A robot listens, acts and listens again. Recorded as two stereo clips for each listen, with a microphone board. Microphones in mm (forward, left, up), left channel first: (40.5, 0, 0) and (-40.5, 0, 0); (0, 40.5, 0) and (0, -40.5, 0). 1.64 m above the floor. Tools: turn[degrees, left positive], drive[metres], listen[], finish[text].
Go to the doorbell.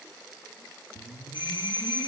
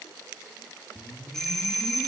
Action: drive[1.0]
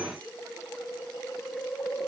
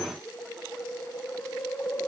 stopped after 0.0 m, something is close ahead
Action: listen[]
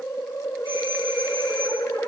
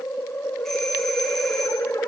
Action: listen[]
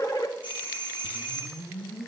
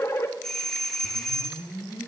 Action: finish[Blocked. The doorbell is further on, straight ahead.]